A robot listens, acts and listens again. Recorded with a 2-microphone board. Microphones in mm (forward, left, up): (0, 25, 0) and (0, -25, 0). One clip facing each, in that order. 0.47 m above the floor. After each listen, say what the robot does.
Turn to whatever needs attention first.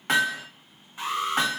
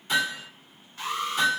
Turn 20° left.
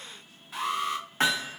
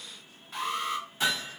Facing the alarm, 1 to 2 m away.